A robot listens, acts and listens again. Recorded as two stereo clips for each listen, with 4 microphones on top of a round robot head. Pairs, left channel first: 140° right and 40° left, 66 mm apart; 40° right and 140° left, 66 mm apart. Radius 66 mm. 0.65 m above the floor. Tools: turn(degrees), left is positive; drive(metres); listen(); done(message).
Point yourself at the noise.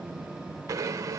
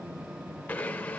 turn(degrees=25)
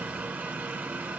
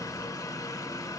turn(degrees=-20)
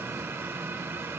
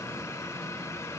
listen()
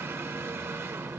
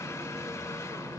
listen()
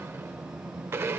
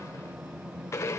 done("Facing the blender, under 1 m away.")